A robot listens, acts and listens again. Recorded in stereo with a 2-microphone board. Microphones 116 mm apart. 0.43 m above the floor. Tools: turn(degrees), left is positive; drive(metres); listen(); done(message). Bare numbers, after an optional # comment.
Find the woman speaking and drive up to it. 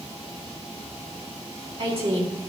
# The woman speaking: about 60° right or 120° right.
turn(-60)
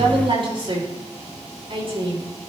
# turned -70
# So it is at 50° right.
turn(-50)
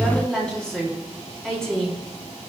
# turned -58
# The woman speaking is now 10° left.
turn(10)
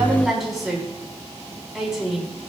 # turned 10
drive(1.0)
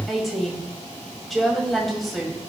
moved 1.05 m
drive(1.0)
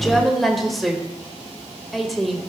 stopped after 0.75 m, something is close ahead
done("I am next to the woman speaking.")